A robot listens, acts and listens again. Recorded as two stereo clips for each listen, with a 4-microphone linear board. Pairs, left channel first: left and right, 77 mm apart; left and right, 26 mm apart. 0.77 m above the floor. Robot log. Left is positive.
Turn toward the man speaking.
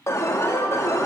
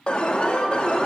cmd idle
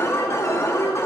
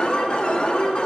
cmd idle
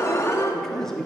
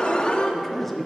cmd yaw +30
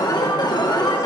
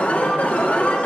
cmd idle
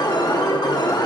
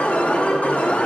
cmd idle
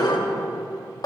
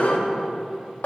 end: I heard a man speaking, but can't make it out now. It was about 25° right or 145° left.